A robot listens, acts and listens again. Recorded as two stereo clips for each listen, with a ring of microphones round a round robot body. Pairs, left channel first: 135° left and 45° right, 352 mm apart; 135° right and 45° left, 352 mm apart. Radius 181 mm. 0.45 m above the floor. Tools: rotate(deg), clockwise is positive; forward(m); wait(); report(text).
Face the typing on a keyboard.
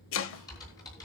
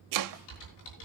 rotate(145)
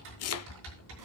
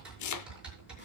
rotate(40)
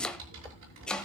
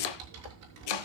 report("Found it: typing on a keyboard, straight ahead.")